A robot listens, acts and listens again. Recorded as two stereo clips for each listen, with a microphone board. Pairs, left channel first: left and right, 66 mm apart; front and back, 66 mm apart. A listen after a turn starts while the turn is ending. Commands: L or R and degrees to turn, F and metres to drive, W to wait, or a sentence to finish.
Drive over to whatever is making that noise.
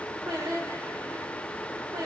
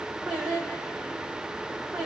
R100
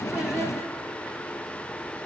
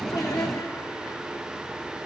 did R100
W
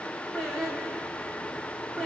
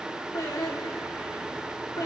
F1.0
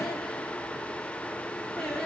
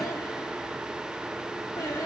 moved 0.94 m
F1.0
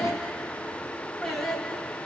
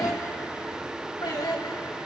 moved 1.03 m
F1.0
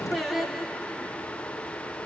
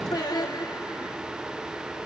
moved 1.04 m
F1.0
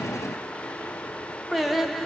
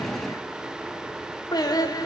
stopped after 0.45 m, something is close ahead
I am next to the singing.